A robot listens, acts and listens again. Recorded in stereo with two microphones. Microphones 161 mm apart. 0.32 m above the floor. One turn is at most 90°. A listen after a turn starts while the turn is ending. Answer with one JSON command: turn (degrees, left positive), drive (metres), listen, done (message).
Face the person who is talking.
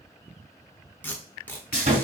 {"listen": true}
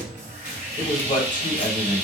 {"turn": 55}
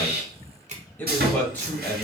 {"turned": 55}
{"turn": 15}
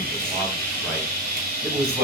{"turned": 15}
{"done": "Facing the man speaking, 1 to 2 m away."}